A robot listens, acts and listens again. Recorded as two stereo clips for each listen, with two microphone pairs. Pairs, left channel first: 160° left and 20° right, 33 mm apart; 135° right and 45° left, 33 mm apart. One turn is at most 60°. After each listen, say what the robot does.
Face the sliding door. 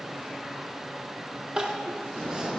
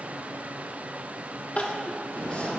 Turn 60° right.
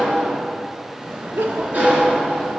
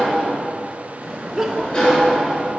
Turn 60° right.
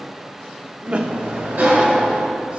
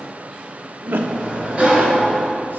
Facing the sliding door.